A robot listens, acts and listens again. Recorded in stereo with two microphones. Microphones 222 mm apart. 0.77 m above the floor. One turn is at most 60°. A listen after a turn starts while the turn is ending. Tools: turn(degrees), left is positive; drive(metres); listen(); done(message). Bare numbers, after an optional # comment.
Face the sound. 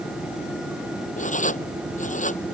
# The writing: about 35° left or 145° left.
turn(35)
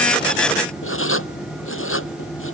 # So it is at 110° left.
turn(60)
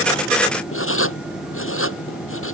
# The writing is now 70° left.
turn(60)
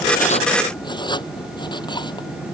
# The writing is now 20° left.
turn(20)
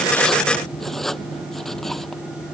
done("Facing the writing.")